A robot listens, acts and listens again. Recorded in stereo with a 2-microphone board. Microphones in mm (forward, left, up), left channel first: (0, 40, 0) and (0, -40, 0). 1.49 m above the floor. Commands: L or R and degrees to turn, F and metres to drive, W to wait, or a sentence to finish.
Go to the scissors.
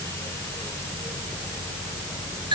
W
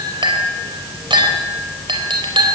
W
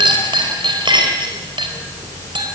I can't make out scissors, only a clink.